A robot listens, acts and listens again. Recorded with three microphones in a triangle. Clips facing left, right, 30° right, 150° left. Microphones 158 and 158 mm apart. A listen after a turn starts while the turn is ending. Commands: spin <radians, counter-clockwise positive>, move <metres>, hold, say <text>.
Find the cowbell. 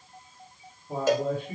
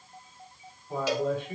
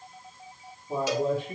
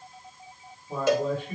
spin 2.18
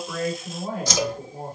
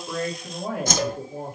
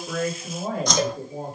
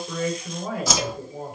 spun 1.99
spin 0.17
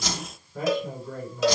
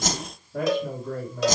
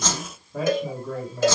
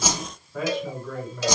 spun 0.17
say Facing the cowbell, under 1 m away.